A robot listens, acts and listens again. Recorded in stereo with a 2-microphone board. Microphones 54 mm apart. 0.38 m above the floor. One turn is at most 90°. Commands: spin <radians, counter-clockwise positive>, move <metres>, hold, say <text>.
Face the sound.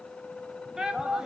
spin -0.52
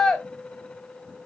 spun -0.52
spin 0.26
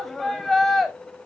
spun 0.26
say Found it: a shout, straight ahead, 1 to 2 m away.